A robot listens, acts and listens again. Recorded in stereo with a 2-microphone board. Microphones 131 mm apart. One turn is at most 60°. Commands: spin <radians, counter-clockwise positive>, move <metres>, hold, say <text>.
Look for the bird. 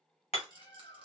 spin 0.70
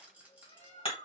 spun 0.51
spin 1.05
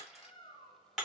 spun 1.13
spin 0.79
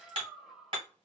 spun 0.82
say Found it: a bird, straight ahead.